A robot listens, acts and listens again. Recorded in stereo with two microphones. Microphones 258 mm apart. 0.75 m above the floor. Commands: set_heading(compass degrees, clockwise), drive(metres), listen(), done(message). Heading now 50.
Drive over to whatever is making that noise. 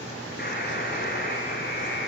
set_heading(10)
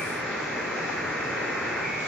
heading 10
drive(1.0)
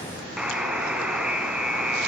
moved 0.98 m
drive(1.0)
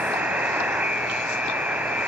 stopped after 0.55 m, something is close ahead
done("Arrived at the buzzer, straight ahead.")